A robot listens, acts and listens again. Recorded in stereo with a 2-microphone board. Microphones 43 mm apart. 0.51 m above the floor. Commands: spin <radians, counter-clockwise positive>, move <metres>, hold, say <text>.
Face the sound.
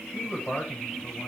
spin 0.61
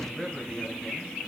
spin 0.17
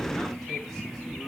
hold
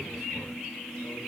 hold
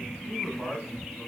spin 0.26
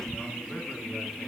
hold
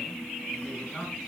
say Facing the man speaking.